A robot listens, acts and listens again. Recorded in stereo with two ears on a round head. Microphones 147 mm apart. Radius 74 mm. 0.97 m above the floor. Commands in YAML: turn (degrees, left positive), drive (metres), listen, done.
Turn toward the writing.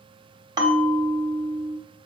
listen: true
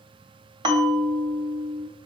listen: true
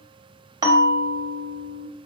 done: "I can't make out writing to turn to."